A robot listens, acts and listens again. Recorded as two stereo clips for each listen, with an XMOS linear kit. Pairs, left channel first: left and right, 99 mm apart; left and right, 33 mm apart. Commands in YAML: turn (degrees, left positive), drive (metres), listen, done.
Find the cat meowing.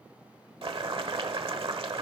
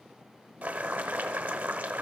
listen: true
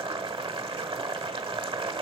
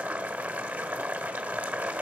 listen: true
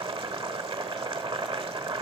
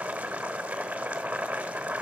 done: "I can't make out a cat meowing, only boiling."